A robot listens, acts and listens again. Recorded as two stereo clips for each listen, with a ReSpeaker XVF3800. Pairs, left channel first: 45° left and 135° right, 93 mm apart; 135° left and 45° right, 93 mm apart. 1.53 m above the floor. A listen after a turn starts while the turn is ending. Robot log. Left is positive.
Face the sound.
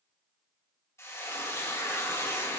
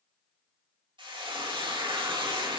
note: The frying: 15° right.
cmd yaw -15
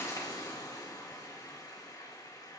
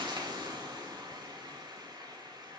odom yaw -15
end: Found it: frying, straight ahead, 2 to 4 m away.